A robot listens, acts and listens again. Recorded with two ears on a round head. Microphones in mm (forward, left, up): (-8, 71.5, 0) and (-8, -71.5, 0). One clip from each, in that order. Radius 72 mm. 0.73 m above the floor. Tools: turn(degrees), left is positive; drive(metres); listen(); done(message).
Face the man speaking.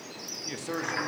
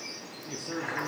turn(degrees=45)
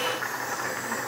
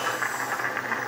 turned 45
listen()
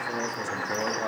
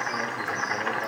listen()
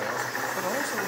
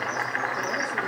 done("I heard a man speaking, but can't make it out now. It was about straight ahead or 90° left.")